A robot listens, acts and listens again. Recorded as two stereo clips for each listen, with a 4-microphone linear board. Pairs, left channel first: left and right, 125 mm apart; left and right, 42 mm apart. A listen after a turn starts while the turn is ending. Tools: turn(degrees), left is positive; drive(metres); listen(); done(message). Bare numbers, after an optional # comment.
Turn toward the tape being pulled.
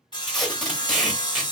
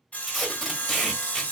turn(30)
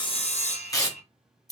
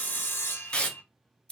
# So it is at 150° left.
turn(150)
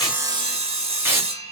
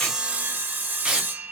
# The tape being pulled is now 20° right.
turn(-20)
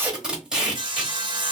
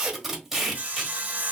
done("Facing the tape being pulled.")